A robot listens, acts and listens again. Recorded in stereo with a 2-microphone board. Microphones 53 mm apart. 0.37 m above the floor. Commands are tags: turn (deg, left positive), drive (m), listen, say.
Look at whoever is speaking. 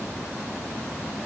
<listen/>
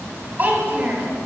<turn deg="-35"/>
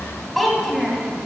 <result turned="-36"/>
<say>Found it: a child speaking, straight ahead.</say>